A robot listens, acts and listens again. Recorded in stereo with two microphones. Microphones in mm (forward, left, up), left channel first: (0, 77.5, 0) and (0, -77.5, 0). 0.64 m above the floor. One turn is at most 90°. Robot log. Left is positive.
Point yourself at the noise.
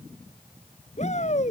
note: The shout: about 55° left or 125° left.
cmd yaw +55
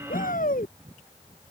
note: So it is at 75° left.
cmd yaw +75
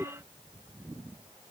end: Found it: a shout, straight ahead.